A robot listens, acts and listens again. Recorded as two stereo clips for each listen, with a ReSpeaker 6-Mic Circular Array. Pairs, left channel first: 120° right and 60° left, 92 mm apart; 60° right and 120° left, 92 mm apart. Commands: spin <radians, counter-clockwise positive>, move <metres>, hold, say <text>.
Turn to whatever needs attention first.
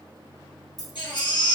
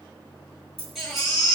spin -2.62
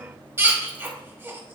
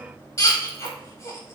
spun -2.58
say Facing the baby crying.